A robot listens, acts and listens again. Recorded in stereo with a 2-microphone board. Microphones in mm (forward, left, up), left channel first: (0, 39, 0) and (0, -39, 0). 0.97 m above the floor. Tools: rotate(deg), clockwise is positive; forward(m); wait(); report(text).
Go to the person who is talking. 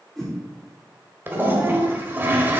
rotate(60)
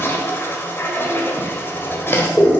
wait()
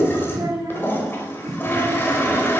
rotate(55)
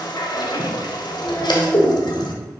rotate(-10)
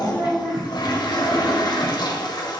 forward(1.0)
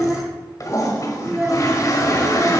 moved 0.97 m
forward(1.0)
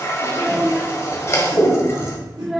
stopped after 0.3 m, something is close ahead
report("I am next to the child speaking.")